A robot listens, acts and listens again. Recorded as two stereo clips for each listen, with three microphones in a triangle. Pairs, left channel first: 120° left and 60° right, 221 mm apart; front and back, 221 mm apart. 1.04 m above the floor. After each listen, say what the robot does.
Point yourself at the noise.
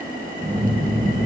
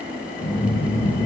Turn 30° left.
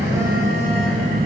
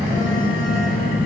Turn 15° left.
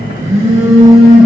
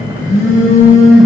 Facing the phone buzzing.